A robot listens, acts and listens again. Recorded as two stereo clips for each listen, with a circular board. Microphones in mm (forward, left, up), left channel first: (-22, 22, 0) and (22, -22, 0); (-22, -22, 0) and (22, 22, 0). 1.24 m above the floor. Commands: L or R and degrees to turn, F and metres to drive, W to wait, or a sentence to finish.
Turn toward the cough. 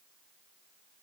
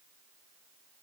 W
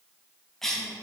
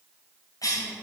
R140
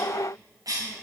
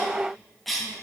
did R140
R45
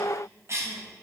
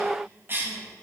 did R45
Found it: a cough, straight ahead.